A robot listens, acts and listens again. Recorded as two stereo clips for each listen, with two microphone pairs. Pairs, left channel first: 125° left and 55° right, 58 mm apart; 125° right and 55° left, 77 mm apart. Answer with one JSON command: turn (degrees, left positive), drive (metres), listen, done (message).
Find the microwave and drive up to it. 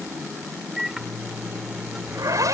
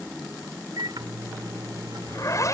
{"turn": 25}
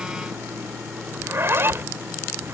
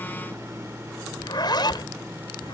{"listen": true}
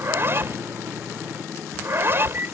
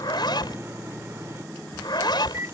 {"drive": 1.0}
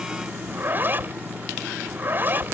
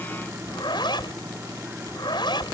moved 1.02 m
{"listen": true}
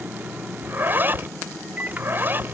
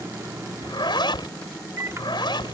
{"drive": 1.0}
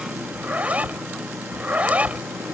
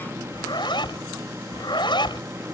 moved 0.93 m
{"listen": true}
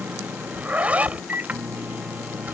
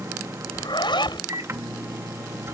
{"drive": 1.0}
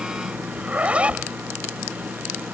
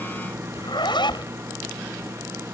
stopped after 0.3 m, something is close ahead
{"done": "I am next to the microwave."}